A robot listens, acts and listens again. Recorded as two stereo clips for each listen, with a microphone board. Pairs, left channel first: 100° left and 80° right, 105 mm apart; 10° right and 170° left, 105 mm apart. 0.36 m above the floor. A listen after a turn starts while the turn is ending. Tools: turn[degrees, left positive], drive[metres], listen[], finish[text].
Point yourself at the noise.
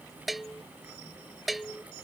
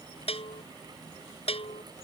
Thought: The bell: 10° left.
Action: turn[10]
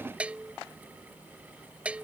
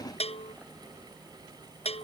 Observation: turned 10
Action: finish[Found it: a bell, straight ahead.]